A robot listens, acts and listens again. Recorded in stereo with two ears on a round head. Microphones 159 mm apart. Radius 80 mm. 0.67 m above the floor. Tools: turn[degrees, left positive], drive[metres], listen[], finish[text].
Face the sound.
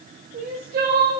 Thought: The crying: about 50° right or 130° right.
Action: turn[-50]
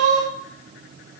Thought: So it is at 80° right.
Action: turn[-80]
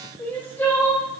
Thought: The crying is now 10° left.
Action: turn[10]
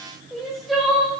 Action: finish[Facing the crying.]